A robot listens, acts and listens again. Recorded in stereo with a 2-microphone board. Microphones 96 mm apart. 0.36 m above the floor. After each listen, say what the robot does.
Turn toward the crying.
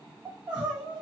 Turn 30° right.
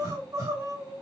Turn 135° right.
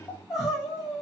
Found it: crying, straight ahead, 2 to 4 m away.